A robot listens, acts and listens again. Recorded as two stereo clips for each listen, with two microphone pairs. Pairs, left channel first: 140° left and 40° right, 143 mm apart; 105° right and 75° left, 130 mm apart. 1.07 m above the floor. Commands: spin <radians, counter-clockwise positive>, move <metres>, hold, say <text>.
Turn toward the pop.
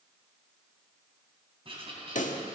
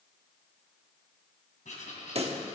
spin 2.01
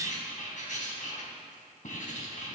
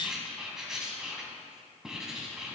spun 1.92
say Facing where the pop came from. I can't hear it now.